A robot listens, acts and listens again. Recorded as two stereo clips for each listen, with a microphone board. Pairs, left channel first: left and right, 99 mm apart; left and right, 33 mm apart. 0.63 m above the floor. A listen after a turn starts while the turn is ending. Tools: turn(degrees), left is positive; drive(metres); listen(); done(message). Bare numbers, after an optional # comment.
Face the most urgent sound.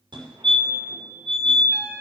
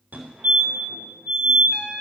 # The fire alarm: about 60° right or 120° right.
turn(-60)
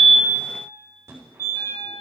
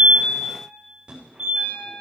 # So it is at 30° right.
turn(-30)
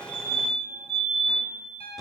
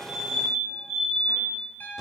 done("Facing the fire alarm, 2 to 4 m away.")